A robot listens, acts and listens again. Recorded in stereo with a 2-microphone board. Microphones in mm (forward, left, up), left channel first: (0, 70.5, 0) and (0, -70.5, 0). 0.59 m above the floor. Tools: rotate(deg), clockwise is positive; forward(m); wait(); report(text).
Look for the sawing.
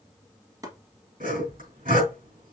rotate(90)
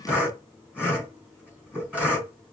rotate(10)
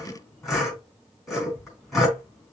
report("Found it: sawing, straight ahead, 2 to 4 m away.")